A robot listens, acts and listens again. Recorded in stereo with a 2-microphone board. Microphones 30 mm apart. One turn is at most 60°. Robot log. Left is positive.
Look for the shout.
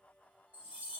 cmd idle
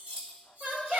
note: The shout: about 70° right or 110° right.
cmd yaw -60
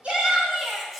note: So it is at 35° right.
cmd yaw -35
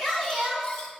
end: Found it: a shout, straight ahead, 2 to 4 m away.